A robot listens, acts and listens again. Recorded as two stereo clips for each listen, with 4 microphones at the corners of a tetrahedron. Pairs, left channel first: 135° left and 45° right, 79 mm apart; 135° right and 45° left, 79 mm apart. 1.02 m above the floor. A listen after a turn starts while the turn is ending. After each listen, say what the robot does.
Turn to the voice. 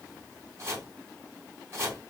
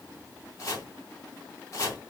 Keep listening.
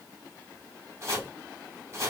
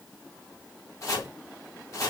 Keep listening.
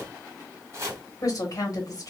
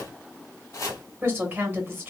Turn 105° left.
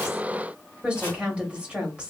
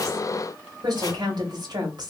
Turn 30° left.
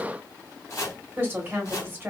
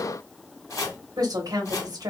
Turn 20° left.
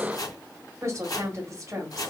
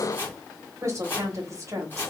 Found it: a woman speaking, straight ahead, 1 to 2 m away.